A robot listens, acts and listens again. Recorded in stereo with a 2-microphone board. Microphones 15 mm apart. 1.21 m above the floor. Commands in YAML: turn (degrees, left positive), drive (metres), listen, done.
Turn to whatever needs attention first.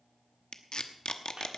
listen: true
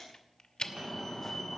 turn: 20
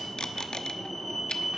done: "Facing the fire alarm, 2 to 4 m away."